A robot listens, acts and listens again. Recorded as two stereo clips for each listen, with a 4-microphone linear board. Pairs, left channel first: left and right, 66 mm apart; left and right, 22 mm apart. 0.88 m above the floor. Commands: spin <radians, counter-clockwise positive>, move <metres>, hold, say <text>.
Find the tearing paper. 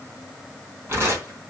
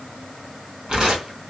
spin -0.70
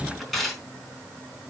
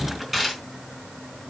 say Facing the tearing paper, over 4 m away.